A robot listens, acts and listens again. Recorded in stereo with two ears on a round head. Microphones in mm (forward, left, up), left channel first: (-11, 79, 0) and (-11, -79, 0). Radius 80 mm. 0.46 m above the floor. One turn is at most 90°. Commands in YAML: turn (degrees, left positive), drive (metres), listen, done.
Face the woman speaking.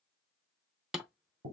listen: true
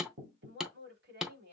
turn: -70
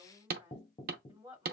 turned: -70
turn: -20
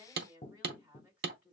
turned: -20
turn: -10
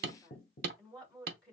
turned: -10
done: "Found it: a woman speaking, straight ahead, 2 to 4 m away."